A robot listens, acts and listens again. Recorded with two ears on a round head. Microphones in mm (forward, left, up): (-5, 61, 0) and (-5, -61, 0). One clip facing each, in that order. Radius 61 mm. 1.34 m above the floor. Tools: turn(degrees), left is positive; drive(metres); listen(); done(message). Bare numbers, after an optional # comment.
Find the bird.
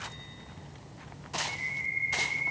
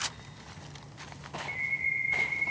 turn(-30)
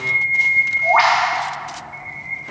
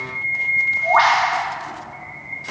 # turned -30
# So it is at 15° left.
turn(15)
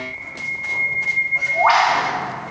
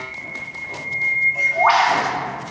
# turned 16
done("Found it: a bird, straight ahead.")